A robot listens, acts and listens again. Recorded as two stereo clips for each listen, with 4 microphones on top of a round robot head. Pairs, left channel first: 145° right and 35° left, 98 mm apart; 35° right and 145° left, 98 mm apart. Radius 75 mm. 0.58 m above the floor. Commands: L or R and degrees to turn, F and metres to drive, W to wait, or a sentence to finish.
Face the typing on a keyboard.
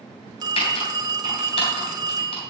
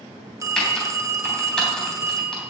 R115
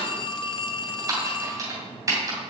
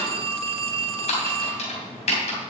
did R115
R25
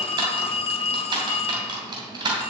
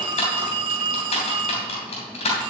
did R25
R10
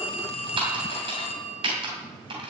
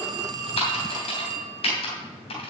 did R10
Found it: typing on a keyboard, straight ahead, 2 to 4 m away.